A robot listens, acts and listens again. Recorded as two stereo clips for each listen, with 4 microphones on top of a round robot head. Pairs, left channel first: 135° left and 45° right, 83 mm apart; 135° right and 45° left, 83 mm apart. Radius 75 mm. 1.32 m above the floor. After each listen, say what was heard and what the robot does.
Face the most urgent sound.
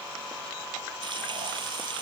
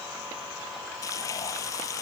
Keep listening.
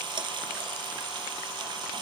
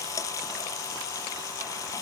Keep listening.
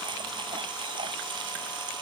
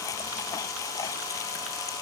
I can't make out anything urgent, only frying.